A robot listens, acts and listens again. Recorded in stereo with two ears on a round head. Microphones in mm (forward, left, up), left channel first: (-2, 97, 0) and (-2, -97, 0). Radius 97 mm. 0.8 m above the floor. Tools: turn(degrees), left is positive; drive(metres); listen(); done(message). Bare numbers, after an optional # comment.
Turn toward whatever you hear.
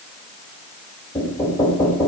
turn(30)
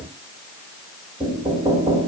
# So it is at 20° right.
turn(-20)
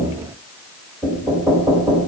done("Found it: knocking, straight ahead.")